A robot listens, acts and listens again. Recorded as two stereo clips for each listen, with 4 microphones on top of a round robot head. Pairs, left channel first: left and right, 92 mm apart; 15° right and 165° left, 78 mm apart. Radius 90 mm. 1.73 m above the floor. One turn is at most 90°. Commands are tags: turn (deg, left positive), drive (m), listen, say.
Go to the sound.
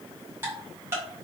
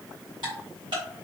<turn deg="-90"/>
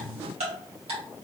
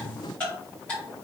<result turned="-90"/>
<turn deg="-90"/>
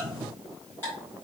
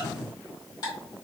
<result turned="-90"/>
<turn deg="20"/>
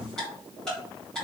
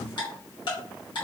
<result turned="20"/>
<drive m="1.0"/>
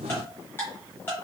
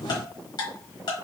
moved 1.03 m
<turn deg="15"/>
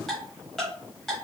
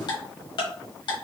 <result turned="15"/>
<drive m="1.0"/>
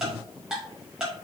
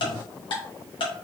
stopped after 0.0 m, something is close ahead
<say>I am next to the ticking.</say>